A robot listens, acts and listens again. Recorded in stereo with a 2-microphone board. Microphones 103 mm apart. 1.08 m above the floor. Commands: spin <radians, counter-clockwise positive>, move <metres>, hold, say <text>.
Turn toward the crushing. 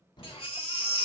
spin 0.79
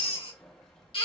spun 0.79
say Found it: crushing, straight ahead, 1 to 2 m away.